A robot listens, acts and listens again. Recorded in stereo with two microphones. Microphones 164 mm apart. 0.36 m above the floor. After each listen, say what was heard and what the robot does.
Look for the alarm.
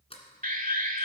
The alarm: about 60° right or 120° right. Turn 60° right.
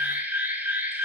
So it is at 15° right. Turn 15° right.
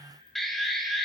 Facing the alarm.